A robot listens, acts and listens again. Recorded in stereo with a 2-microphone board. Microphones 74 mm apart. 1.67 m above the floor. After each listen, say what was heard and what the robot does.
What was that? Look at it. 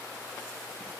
Keep listening.
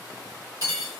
The cutlery clinking: about 55° right or 125° right. Turn 55° right.
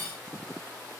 So it is at 40° right. Turn 40° right.
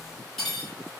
Found it: cutlery clinking, straight ahead, 1 to 2 m away.